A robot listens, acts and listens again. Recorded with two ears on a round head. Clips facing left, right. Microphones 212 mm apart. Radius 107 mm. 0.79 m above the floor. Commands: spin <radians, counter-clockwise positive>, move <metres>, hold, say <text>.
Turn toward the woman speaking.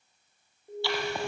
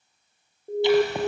hold
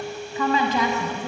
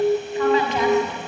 spin 1.57
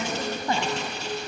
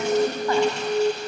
hold
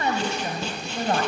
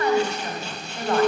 spin 0.52
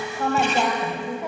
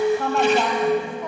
spin 0.17
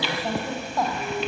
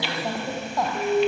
say Found it: a woman speaking, straight ahead, 2 to 4 m away.